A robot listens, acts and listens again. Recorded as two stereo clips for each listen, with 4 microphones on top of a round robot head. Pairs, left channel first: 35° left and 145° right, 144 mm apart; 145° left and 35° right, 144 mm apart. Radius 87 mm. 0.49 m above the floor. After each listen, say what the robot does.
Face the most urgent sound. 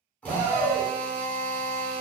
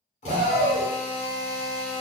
Turn 65° right.
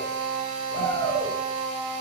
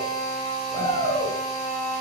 Turn 10° right.
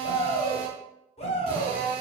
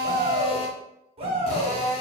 Found it: a shout, straight ahead.